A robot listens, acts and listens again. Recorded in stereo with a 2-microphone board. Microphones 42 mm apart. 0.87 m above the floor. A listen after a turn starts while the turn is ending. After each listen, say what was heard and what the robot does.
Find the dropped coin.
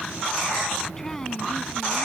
Keep listening.
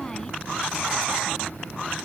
Keep listening.
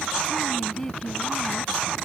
I can't make out a dropped coin to turn to.